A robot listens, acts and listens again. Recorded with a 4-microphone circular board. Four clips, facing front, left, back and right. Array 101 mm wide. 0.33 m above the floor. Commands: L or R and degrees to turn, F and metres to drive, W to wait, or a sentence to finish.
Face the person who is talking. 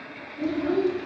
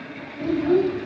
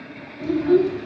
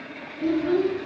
L90
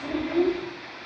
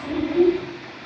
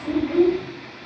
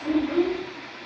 Found it: a child speaking, straight ahead, 1 to 2 m away.